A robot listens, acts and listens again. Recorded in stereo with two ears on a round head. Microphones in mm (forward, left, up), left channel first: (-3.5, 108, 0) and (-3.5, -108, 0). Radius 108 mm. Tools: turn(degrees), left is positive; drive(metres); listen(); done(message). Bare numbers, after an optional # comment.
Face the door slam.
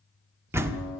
turn(-30)
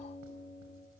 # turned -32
listen()
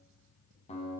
done("I heard a door slam, but can't make it out now. It was about 20° left or 140° right.")